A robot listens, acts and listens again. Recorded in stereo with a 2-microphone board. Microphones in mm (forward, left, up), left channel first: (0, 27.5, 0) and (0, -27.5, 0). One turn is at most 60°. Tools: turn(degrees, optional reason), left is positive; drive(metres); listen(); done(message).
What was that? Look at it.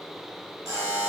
turn(degrees=-60)
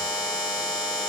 turn(degrees=-25, reason="So it is at 25° right.")
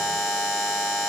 done("Facing the buzzer.")